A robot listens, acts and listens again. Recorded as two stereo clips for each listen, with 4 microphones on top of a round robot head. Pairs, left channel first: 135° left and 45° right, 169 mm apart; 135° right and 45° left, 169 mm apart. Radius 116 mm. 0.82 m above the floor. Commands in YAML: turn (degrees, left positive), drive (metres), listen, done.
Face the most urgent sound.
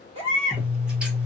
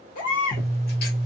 turn: -95
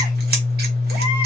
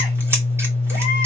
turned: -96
listen: true
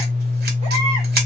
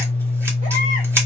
listen: true
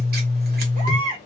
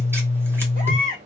done: "Found it: a baby crying, straight ahead, 2 to 4 m away."